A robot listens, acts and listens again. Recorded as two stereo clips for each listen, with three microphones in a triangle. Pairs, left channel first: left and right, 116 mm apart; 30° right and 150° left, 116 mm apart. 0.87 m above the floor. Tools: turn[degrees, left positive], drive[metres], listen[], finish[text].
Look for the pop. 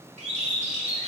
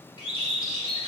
Action: listen[]
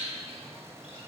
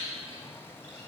Action: listen[]
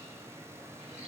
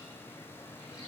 Action: finish[I can't make out a pop to turn to.]